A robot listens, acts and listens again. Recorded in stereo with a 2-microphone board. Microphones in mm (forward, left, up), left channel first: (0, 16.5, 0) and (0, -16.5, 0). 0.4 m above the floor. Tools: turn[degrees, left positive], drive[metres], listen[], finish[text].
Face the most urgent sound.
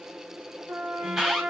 Action: turn[-30]
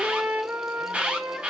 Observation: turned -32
Thought: So it is at 135° right.
Action: turn[-135]
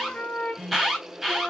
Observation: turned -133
Action: finish[Facing the alarm.]